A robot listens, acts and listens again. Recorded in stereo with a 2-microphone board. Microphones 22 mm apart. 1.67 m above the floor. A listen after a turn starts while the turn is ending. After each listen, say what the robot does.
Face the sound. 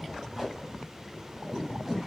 Turn 20° right.
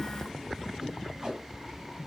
Turn 140° right.
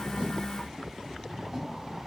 Turn 15° right.
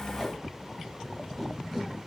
Facing the tape being pulled.